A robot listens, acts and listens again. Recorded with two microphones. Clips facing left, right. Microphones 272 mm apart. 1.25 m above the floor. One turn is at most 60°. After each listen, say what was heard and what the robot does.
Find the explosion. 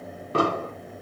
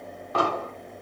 The explosion: about 35° left or 145° left. Turn 35° left.
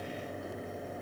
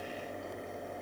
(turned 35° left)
Keep listening.
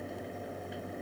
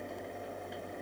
I heard an explosion, but can't make it out now. It was about straight ahead or 110° left.